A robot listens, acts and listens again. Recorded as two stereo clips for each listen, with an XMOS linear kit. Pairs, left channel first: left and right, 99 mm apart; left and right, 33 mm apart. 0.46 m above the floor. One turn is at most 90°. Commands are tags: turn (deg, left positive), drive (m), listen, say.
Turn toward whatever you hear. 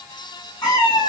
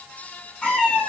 <turn deg="30"/>
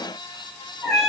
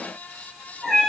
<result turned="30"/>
<say>Found it: a cat meowing, straight ahead.</say>